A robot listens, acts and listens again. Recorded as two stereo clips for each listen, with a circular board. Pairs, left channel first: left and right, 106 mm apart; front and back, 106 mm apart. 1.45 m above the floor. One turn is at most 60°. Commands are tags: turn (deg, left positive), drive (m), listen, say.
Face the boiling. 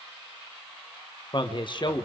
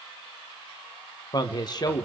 <listen/>
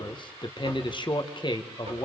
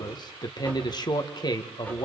<listen/>
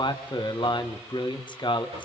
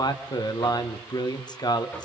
<say>I can't make out boiling to turn to.</say>